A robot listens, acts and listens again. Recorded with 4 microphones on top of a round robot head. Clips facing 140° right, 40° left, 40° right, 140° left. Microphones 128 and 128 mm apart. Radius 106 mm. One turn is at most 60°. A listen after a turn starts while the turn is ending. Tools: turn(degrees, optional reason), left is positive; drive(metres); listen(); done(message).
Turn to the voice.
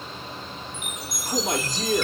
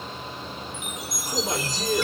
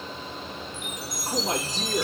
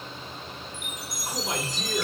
turn(degrees=-60, reason="The man speaking: 100° right.")
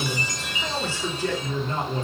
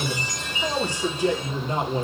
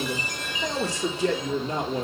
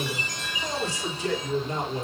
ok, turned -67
turn(degrees=-35, reason="The man speaking is now 35° right.")
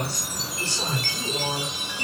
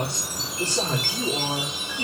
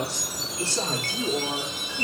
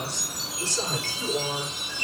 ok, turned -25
done("Found it: a man speaking, straight ahead, 2 to 4 m away.")